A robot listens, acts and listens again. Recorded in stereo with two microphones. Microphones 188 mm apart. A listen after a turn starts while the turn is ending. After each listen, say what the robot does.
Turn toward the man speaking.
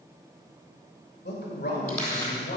Turn 60° left.
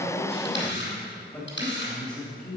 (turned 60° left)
Found it: a man speaking, straight ahead, 2 to 4 m away.